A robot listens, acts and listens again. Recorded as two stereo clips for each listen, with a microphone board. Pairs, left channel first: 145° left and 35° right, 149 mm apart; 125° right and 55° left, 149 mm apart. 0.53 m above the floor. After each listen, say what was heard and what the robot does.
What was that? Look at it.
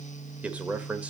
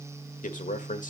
The man speaking: 115° right. Turn 115° right.
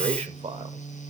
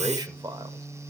Facing the man speaking, 1 to 2 m away.